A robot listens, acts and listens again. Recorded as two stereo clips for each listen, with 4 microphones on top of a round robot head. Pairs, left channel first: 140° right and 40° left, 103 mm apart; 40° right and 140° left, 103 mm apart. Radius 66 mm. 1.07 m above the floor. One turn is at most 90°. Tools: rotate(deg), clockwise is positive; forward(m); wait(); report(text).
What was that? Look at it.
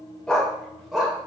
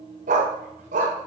rotate(-90)
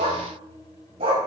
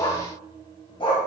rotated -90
report("Facing the dog barking.")